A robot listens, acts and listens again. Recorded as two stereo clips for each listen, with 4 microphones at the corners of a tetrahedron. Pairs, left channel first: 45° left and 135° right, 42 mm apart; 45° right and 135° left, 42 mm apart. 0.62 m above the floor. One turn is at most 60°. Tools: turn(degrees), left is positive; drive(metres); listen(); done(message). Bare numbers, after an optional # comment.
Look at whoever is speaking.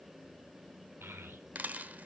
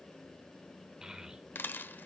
# The child speaking: 150° right.
turn(-60)
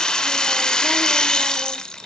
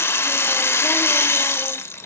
# Nothing new. It was at 90° right.
turn(-60)
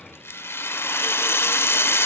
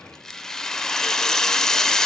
# Nothing new. It was at 30° right.
turn(-30)
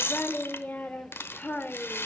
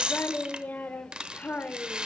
done("Facing the child speaking, 1 to 2 m away.")